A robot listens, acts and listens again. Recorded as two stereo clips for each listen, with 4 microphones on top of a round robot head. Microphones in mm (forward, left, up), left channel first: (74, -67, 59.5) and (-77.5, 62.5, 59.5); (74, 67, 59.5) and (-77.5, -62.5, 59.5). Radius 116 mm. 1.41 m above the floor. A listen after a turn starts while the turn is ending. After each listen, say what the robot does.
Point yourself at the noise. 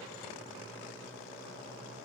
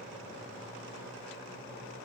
Keep listening.
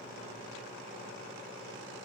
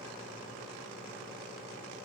Keep listening.
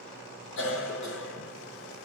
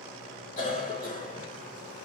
Turn 10° right.
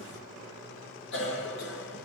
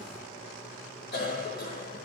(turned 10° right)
Found it: a cough, straight ahead, 1 to 2 m away.